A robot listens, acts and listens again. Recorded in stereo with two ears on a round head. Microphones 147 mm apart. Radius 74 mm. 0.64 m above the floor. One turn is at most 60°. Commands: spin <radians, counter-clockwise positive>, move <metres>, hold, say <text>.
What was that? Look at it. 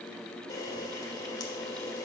spin 0.44
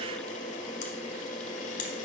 spin 1.05
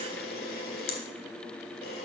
spin 1.05
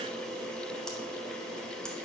say Facing the camera shutter.